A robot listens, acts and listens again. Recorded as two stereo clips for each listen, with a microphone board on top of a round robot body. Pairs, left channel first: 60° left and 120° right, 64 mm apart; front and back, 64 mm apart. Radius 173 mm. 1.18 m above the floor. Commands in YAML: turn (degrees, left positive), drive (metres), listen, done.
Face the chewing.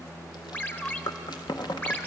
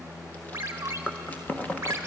turn: 70
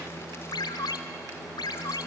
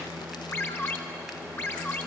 listen: true
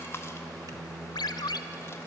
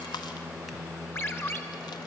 listen: true
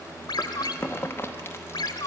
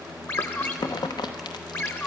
done: "Found it: chewing, straight ahead."